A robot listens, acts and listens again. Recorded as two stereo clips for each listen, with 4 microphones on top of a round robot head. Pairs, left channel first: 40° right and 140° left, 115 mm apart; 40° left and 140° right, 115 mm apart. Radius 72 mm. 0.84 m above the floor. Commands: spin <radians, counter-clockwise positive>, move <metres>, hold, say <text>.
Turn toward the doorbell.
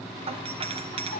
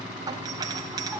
spin 2.88
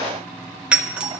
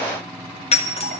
spin 1.05
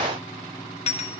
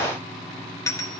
spin -0.35
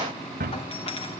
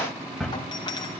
spin -0.17
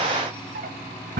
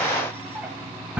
hold
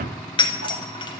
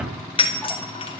say Facing the doorbell.